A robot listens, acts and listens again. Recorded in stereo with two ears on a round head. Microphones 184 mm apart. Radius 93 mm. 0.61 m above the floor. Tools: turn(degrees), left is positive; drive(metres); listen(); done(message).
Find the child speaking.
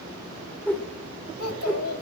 turn(degrees=90)
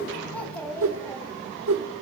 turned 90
turn(degrees=10)
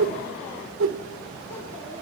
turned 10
listen()
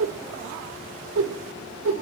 listen()
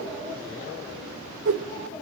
done("Facing where the child speaking came from. I can't hear it now.")